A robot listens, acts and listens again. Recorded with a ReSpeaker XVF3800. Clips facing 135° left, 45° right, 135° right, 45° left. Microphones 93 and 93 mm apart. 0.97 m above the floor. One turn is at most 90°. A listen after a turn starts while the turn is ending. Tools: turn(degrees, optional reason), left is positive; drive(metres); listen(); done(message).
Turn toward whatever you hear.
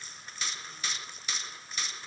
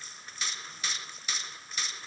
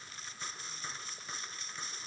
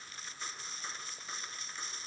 listen()
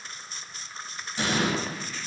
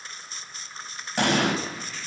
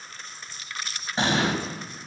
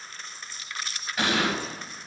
turn(degrees=-75, reason="The explosion: 75° right.")
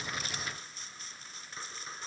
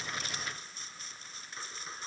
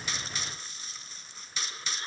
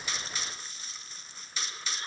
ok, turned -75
done("Facing where the explosion came from. I can't hear it now.")